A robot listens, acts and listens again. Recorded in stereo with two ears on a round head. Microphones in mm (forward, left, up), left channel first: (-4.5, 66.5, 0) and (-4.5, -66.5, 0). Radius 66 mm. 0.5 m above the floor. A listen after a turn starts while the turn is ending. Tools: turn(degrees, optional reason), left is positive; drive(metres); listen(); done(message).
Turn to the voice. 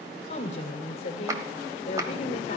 turn(degrees=50, reason="The woman speaking: about 50° left or 130° left.")
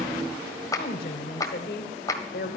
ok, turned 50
turn(degrees=80, reason="So it is at 80° left.")
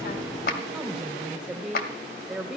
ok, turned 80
done("Found it: a woman speaking, straight ahead, 1 to 2 m away.")